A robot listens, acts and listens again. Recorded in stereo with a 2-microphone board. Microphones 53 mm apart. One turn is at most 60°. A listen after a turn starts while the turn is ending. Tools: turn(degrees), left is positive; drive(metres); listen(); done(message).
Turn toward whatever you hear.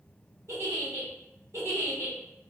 turn(degrees=-60)
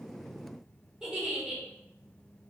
turn(degrees=-10)
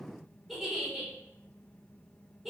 done("Facing the giggle, 1 to 2 m away.")